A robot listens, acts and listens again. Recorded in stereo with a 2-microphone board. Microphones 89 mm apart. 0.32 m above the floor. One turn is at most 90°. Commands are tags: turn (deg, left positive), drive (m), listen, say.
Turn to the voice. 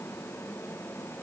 <listen/>
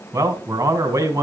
<turn deg="-35"/>
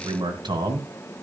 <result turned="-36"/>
<turn deg="-90"/>
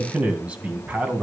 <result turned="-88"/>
<turn deg="-15"/>
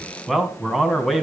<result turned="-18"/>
<say>Facing the man speaking.</say>